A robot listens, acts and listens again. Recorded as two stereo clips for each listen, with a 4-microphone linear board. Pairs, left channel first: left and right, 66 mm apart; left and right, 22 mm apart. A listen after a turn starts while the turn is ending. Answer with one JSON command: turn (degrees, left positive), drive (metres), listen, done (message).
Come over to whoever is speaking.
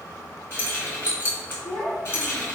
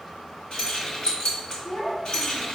{"turn": 30}
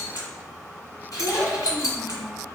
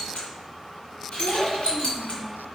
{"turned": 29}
{"turn": 145}
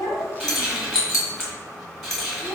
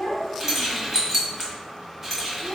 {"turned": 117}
{"turn": 30}
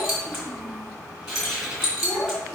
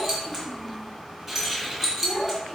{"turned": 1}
{"turn": 25}
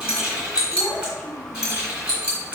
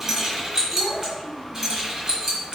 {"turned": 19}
{"turn": 10}
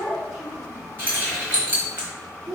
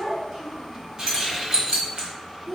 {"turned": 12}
{"drive": 1.0}
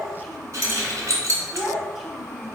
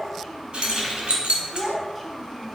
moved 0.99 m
{"drive": 1.0}
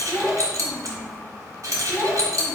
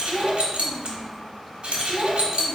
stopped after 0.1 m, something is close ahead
{"done": "I am next to the child speaking."}